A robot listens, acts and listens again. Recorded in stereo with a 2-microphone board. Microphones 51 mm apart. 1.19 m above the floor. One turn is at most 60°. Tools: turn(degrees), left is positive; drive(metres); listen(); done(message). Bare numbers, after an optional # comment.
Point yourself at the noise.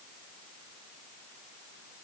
listen()
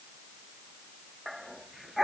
turn(-30)
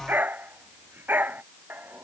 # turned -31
# So it is at 145° right.
turn(-60)
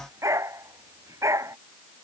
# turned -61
# The dog barking is now 80° right.
turn(-60)
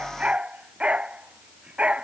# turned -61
# The dog barking is now 20° right.
turn(-20)
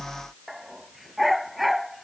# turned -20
done("Facing the dog barking.")